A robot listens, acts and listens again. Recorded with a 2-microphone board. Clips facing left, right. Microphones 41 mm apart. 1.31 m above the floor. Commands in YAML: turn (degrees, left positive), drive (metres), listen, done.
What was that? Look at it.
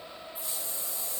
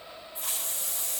turn: -70
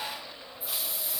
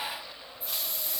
done: "Found it: a hiss, straight ahead."